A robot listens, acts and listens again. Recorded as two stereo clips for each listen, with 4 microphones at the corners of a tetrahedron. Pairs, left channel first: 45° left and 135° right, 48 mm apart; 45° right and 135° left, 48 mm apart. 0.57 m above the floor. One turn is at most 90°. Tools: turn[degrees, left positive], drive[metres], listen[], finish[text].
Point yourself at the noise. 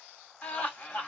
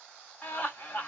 Action: finish[Found it: laughter, straight ahead.]